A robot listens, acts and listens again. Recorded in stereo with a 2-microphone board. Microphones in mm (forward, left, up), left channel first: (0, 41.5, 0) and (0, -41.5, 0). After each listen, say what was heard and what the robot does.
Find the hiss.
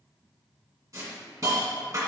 The hiss: about 45° right or 135° right. Turn 45° right.
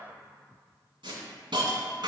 So it is at 95° right. Turn 95° right.
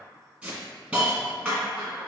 The hiss is now 20° right. Turn 20° right.
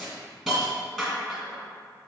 Found it: a hiss, straight ahead.